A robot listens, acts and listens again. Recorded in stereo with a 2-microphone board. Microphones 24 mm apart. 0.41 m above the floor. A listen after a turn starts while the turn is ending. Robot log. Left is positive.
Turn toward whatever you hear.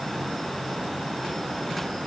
cmd idle
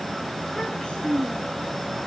note: The child speaking: about 40° left or 140° left.
cmd yaw +40
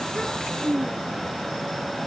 note: So it is at 10° left.
cmd yaw +10
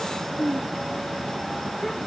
note: The child speaking is now 15° left.
cmd yaw +15
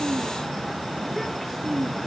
end: Found it: a child speaking, straight ahead.